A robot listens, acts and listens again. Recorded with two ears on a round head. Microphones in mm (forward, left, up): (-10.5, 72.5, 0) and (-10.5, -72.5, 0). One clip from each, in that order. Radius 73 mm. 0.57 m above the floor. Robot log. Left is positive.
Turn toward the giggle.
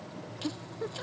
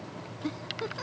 note: The giggle: about 65° right or 115° right.
cmd yaw -65
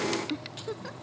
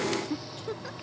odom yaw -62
end: Facing the giggle.